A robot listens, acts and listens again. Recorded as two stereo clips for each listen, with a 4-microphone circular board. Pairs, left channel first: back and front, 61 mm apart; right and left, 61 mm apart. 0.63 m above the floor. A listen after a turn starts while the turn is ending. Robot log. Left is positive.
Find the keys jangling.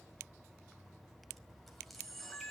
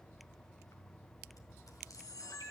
cmd idle
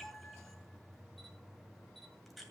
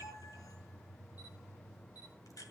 cmd idle
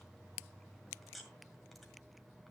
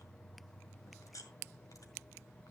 end: I can't make out keys jangling, only a camera shutter.